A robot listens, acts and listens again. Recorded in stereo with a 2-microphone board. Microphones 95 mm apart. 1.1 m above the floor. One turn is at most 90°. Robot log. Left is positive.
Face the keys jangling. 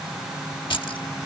note: The keys jangling: about 60° left or 120° left.
cmd yaw +60
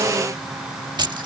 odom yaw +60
note: So it is at 50° right.
cmd yaw -50
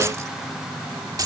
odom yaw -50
note: The keys jangling is now 40° right.
cmd yaw -40
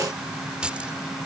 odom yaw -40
note: The keys jangling is now 10° right.
cmd yaw -10
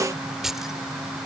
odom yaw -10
end: Found it: keys jangling, straight ahead.